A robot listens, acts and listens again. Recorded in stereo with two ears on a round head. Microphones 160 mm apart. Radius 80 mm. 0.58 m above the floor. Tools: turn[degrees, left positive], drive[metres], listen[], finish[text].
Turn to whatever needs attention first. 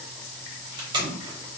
Action: listen[]
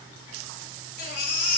Thought: The baby crying: about 60° left or 120° left.
Action: turn[60]
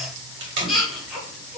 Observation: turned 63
Action: finish[Found it: a baby crying, straight ahead, 1 to 2 m away.]